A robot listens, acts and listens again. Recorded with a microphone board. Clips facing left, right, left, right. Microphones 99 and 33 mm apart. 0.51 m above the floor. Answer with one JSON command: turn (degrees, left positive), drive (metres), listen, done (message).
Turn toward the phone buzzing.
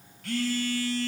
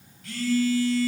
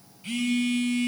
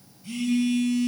{"turn": 55}
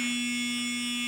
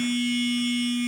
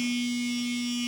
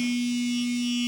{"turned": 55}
{"done": "Facing the phone buzzing, 1 to 2 m away."}